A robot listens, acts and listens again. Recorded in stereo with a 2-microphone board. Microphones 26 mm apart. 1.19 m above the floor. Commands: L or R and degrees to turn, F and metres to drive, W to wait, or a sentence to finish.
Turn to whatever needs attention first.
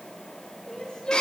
L35
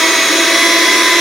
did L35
W
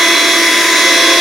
W
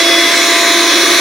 I heard crying, but can't make it out now. It was about straight ahead or 110° left.